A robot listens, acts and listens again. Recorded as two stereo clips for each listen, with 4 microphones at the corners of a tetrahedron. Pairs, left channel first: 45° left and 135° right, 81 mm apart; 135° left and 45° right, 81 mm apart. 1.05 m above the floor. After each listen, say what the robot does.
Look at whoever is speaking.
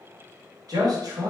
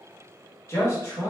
Turn 170° right.
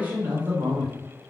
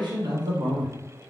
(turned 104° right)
Turn 65° right.
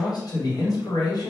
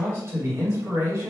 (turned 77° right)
Turn 10° left.
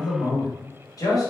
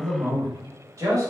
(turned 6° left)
Found it: a man speaking, straight ahead, 1 to 2 m away.